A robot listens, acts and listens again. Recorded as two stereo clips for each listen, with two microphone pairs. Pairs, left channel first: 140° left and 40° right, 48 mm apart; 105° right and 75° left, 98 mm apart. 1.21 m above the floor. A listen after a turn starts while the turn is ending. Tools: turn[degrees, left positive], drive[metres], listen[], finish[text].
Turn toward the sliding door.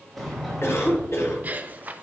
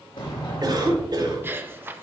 Thought: The sliding door: 135° right.
Action: turn[-135]
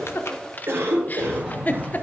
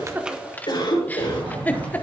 Thought: The sliding door is now 40° left.
Action: turn[40]
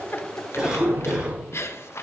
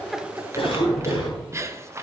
Thought: The sliding door is now 10° right.
Action: turn[-10]
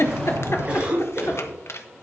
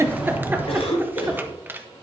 Action: finish[Found it: a sliding door, straight ahead, over 4 m away.]